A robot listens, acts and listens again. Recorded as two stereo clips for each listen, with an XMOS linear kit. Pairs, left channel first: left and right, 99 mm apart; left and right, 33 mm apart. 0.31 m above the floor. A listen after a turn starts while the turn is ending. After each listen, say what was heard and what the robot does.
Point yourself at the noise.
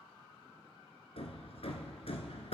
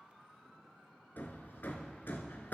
Turn 90° left.
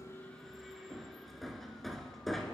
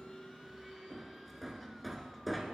Found it: hammering, straight ahead.